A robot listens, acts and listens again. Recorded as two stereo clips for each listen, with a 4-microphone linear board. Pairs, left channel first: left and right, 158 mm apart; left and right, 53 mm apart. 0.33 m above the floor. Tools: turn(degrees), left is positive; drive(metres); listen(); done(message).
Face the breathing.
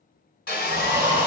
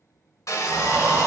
turn(degrees=-70)
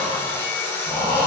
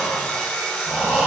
turn(degrees=-20)
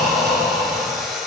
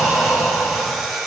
done("Facing the breathing.")